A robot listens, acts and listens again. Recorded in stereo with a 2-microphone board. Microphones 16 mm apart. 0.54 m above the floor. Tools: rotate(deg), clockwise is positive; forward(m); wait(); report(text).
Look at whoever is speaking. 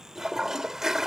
wait()
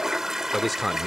rotate(30)
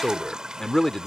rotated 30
rotate(-25)
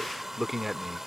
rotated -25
rotate(20)
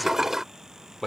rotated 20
rotate(10)
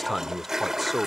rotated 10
report("Found it: a man speaking, straight ahead.")